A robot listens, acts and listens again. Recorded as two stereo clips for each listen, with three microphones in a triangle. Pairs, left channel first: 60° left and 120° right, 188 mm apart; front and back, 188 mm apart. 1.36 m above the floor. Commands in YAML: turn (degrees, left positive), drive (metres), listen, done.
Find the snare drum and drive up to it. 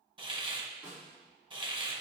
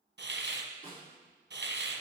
turn: -40
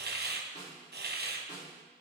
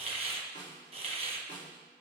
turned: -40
turn: 10
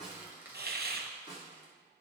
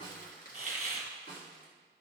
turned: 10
drive: 1.0
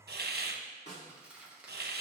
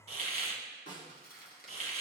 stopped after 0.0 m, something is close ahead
turn: 10
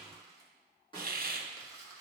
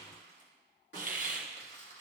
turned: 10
done: "Something is in my way. I am facing the snare drum but have not reached it."